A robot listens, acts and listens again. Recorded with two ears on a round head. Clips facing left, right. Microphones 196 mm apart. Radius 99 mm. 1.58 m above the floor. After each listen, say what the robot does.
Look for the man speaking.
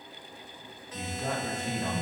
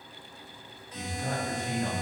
Turn 70° left.
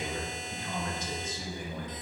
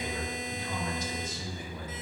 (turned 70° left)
Turn 40° left.
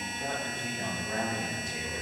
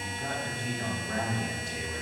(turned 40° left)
Turn 15° left.
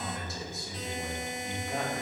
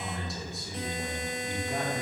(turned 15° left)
Facing the man speaking, 1 to 2 m away.